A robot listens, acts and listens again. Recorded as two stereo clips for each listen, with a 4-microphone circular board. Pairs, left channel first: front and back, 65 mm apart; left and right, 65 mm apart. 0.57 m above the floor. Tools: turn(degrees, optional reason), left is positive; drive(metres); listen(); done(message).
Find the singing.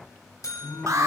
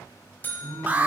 turn(degrees=-45, reason="The singing: 45° right.")
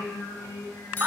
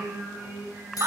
turn(degrees=-10, reason="The singing is now 10° right.")
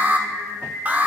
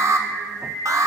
done("Facing the singing, over 4 m away.")